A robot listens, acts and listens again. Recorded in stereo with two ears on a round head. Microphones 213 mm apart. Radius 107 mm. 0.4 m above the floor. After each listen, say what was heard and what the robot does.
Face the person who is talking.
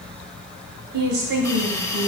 The woman speaking: about 50° right or 130° right. Turn 50° right.
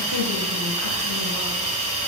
Keep listening.
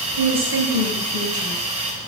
So it is at 70° right. Turn 70° right.
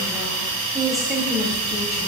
Found it: a woman speaking, straight ahead, 2 to 4 m away.